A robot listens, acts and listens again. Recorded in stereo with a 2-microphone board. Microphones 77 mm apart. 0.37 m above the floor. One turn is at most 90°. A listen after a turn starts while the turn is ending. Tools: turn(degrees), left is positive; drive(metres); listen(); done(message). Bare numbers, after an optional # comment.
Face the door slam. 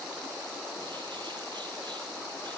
listen()
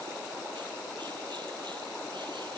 listen()
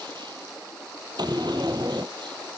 # The door slam: about 60° right or 120° right.
turn(-60)
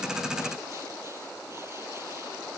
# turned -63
listen()
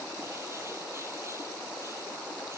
done("I heard a door slam, but can't make it out now. It was about straight ahead or 55° right.")